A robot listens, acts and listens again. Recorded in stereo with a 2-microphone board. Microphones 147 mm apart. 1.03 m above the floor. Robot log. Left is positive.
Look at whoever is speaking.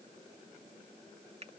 cmd idle
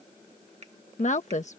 note: The woman speaking: about 55° left or 125° left.
cmd yaw +55
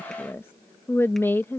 note: So it is at 15° left.
cmd yaw +15
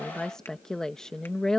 end: Facing the woman speaking.